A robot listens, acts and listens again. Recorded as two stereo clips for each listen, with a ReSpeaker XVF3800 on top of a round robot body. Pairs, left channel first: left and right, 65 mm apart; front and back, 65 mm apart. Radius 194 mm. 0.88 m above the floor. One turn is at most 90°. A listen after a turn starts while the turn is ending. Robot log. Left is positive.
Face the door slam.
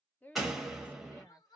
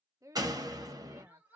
note: The door slam: 175° right.
cmd yaw -90
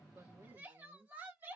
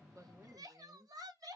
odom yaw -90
note: Nothing new. It was at 85° right.
cmd yaw -85
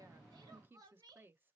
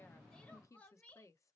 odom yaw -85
end: Facing where the door slam came from. I can't hear it now.